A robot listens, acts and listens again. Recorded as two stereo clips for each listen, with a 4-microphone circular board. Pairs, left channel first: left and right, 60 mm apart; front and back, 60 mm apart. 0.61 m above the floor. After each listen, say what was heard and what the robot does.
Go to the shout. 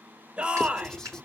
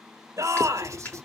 The shout: 155° right. Turn 155° right.
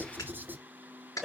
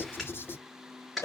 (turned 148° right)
Drive 1.0 m forward.
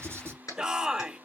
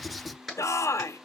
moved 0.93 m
The shout is now 10° right. Turn 10° right.
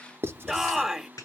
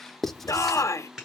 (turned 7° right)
Drive 1.0 m forward.
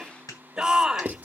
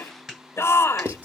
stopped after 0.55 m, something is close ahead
The shout is now 15° right. Turn 15° right.
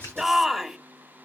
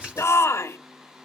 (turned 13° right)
Arrived at the shout, straight ahead.